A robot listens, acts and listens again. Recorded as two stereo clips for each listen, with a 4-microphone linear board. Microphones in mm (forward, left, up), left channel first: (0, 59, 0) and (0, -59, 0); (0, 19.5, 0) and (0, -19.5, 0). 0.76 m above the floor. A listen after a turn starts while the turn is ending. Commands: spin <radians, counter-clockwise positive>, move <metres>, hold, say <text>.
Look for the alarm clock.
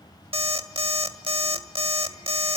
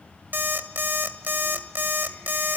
spin -0.87
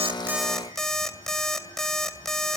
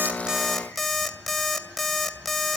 say Found it: an alarm clock, straight ahead.